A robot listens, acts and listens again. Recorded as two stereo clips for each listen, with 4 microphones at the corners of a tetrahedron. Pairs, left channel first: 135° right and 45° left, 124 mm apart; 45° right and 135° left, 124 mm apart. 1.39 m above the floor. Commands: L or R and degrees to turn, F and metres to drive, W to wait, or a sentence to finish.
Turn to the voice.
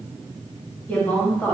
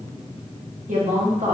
L150
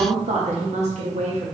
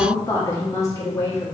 L20
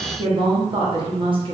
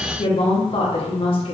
Found it: a woman speaking, straight ahead.